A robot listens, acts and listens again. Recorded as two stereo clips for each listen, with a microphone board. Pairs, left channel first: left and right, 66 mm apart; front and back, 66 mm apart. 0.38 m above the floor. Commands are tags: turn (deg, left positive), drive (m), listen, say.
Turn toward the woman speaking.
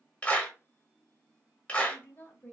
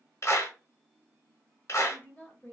<turn deg="45"/>
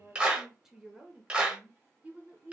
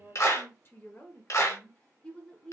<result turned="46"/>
<turn deg="-60"/>
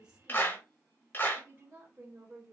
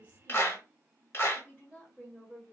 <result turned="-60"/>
<turn deg="-50"/>
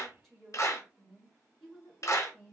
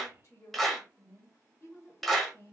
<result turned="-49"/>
<say>Found it: a woman speaking, straight ahead, 1 to 2 m away.</say>